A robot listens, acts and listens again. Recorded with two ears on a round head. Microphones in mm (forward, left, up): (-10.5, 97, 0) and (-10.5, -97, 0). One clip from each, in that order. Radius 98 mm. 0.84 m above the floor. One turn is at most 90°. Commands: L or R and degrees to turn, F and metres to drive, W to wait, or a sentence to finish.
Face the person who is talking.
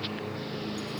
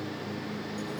W
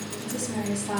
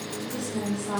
L65
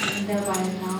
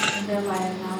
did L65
Found it: a woman speaking, straight ahead.